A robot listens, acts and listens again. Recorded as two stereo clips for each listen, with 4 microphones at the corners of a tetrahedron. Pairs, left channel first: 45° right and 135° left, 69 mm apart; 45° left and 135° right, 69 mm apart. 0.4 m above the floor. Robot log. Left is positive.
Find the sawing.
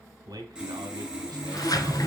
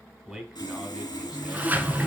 note: The sawing: 60° left.
cmd yaw +60
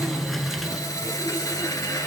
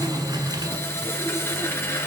note: The sawing is now 10° right.
cmd yaw -10
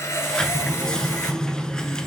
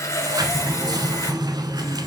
end: Found it: sawing, straight ahead.